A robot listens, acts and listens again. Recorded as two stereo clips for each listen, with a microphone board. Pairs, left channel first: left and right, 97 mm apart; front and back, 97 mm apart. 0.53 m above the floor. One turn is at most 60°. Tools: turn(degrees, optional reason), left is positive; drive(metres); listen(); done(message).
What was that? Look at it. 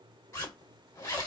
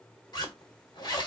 turn(degrees=35, reason="The zipper: 35° left.")
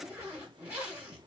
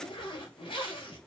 turn(degrees=-15, reason="The zipper is now 15° right.")
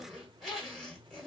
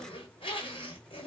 done("Found it: a zipper, straight ahead, 1 to 2 m away.")